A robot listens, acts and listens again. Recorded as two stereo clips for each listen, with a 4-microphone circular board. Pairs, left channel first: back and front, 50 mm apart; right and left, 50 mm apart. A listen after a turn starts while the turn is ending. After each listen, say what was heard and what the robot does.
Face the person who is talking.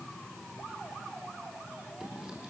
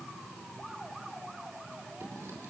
Keep listening.
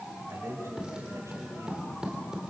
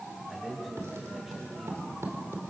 Found it: a man speaking, straight ahead.